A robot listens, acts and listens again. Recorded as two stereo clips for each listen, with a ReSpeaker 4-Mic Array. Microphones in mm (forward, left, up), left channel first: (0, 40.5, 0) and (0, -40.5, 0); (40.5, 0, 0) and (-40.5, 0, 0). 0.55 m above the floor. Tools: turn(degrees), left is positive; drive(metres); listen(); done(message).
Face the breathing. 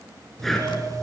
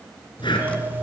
done("Found it: breathing, straight ahead, 2 to 4 m away.")